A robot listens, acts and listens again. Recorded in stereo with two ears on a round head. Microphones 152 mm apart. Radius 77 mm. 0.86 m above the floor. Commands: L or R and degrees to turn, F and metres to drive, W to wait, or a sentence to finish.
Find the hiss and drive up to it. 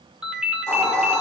L30
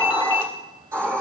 R15
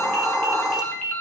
F1.0
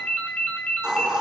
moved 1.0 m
F1.0
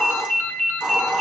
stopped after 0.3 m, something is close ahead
Blocked. The hiss is further on, straight ahead.